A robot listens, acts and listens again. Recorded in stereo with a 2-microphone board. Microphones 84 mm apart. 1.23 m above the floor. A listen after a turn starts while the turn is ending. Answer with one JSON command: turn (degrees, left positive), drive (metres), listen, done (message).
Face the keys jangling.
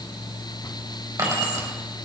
{"turn": -45}
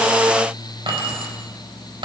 {"turn": -95}
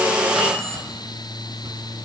{"turn": 25}
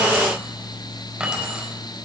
{"turn": -10}
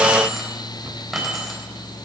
{"done": "Found it: keys jangling, straight ahead, over 4 m away."}